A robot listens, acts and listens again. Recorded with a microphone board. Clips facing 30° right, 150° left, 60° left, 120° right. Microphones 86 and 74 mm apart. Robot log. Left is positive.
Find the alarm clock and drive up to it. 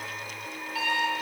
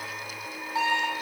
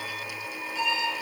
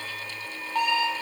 note: The alarm clock: 145° right.
cmd yaw -145
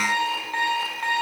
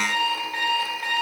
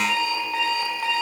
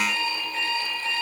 note: The alarm clock is now 35° left.
cmd yaw +35
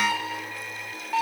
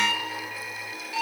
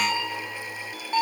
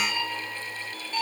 note: The alarm clock is now 15° left.
cmd yaw +15
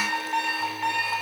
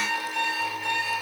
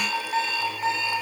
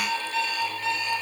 cmd fwd 1.0
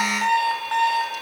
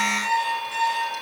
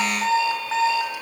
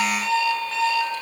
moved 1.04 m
cmd fwd 1.0
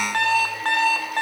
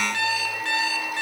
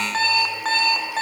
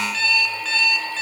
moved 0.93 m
note: The alarm clock is now 10° left.
cmd yaw +10
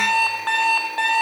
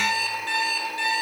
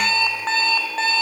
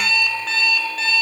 cmd fwd 1.0
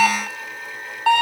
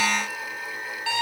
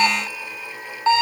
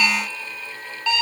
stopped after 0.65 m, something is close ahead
end: I am next to the alarm clock.